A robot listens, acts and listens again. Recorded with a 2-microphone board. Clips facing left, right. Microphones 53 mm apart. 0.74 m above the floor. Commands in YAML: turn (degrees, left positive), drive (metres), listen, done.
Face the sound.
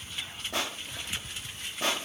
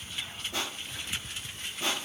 turn: 65
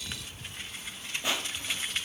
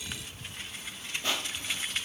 turn: 15
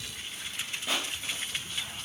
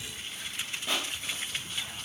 done: "Facing the crushing."